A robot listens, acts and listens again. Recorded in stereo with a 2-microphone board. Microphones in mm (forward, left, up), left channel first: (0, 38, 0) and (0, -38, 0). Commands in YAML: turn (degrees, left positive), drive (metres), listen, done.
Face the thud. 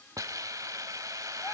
listen: true
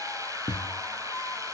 turn: 65
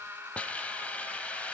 listen: true
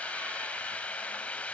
done: "I heard a thud, but can't make it out now. It was about straight ahead or 50° left."